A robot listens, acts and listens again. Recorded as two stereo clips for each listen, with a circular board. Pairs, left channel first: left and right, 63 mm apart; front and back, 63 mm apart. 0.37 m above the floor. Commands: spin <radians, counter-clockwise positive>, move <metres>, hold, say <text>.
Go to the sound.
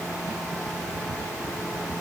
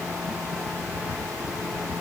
hold
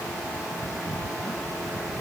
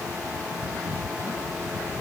hold
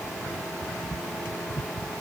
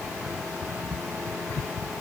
say I can't make out anything.